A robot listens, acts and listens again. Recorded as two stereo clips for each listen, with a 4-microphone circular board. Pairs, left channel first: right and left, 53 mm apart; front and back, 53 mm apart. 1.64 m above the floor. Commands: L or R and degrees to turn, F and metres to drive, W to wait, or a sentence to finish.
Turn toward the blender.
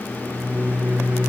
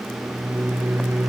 W
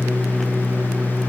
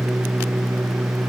W
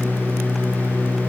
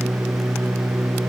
I can't make out a blender to turn to.